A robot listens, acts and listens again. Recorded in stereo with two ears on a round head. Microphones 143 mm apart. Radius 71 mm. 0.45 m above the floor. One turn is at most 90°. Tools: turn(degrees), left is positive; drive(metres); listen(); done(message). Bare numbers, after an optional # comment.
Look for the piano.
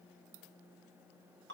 listen()
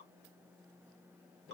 listen()
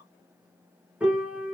turn(-30)
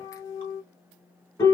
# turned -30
# So it is at 20° left.
turn(20)
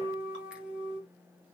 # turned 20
done("Found it: a piano, straight ahead, under 1 m away.")